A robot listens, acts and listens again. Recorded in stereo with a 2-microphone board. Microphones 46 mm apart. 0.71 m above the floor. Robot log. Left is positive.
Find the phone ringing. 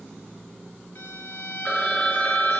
note: The phone ringing: about 25° left or 155° left.
cmd yaw +25
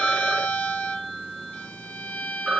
end: Found it: a phone ringing, straight ahead, under 1 m away.